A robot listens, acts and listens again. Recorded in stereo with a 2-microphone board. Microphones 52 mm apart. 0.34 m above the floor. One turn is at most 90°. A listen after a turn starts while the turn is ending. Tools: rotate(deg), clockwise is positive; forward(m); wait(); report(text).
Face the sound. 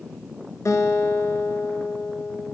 rotate(-90)
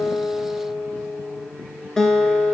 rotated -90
rotate(-10)
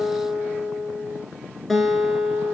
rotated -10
report("Found it: a guitar, straight ahead.")